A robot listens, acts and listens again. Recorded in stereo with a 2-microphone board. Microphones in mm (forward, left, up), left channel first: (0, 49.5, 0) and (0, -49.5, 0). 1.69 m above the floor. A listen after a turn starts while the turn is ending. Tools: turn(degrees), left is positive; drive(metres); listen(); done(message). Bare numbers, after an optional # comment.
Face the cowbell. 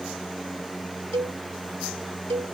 # The cowbell: about 75° right or 105° right.
turn(-75)
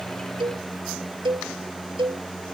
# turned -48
# So it is at 55° right.
turn(-55)
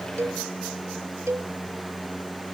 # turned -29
# The cowbell is now 30° right.
turn(-30)
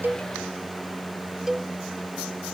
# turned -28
done("Facing the cowbell.")